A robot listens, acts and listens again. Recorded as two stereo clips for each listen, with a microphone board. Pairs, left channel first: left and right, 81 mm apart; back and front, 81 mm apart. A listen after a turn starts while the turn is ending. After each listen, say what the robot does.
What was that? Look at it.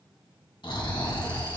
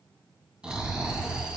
Turn 80° left.
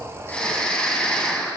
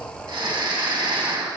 Turn 15° left.
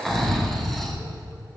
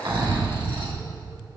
Found it: snoring, straight ahead.